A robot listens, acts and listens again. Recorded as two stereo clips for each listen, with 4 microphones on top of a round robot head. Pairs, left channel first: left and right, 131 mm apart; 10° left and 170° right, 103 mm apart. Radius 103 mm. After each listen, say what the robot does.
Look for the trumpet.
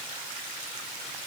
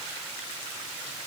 Keep listening.
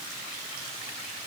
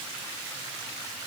Keep listening.
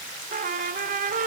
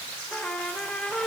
Turn 75° right.
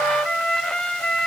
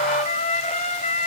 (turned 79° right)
Found it: a trumpet, straight ahead.